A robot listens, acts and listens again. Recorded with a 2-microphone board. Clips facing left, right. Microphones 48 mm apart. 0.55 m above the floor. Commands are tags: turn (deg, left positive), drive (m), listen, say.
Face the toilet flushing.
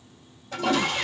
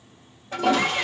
<turn deg="-20"/>
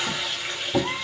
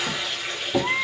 <say>Found it: a toilet flushing, straight ahead, 2 to 4 m away.</say>